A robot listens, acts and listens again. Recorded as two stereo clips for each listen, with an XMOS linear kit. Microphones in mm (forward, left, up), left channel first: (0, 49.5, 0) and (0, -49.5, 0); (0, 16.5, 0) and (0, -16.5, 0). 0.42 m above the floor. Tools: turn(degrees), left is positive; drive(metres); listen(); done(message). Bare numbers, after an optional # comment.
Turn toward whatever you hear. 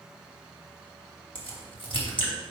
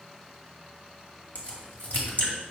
# The crack: about 55° left or 125° left.
turn(55)
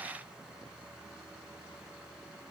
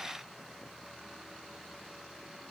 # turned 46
listen()
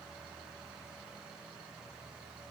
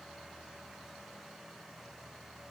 done("I heard a crack, but can't make it out now. It was about 10° left or 75° left.")